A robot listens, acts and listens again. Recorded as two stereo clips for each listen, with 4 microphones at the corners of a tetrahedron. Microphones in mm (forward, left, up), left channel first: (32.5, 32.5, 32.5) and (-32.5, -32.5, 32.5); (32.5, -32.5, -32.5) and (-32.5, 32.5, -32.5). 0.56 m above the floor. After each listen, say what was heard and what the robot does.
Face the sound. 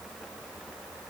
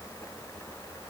Keep listening.
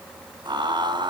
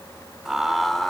The laughter: 130° right. Turn 130° right.
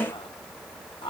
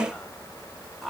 The laughter is now 40° left. Turn 40° left.
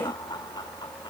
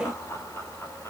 The laughter is now 15° left. Turn 15° left.
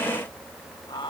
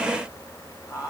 Facing the laughter.